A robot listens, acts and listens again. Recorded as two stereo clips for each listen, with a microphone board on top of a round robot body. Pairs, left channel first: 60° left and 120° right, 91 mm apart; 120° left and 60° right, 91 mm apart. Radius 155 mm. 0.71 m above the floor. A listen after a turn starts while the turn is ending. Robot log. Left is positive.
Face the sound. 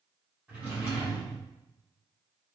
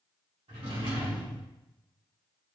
note: The drawer: 45° right.
cmd yaw -45
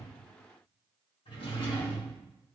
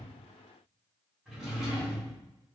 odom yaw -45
note: The drawer is now 25° left.
cmd yaw +25
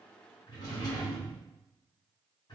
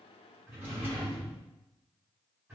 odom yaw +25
note: The drawer is now 10° left.
cmd yaw +10
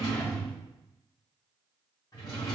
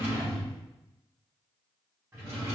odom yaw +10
end: Facing the drawer, 1 to 2 m away.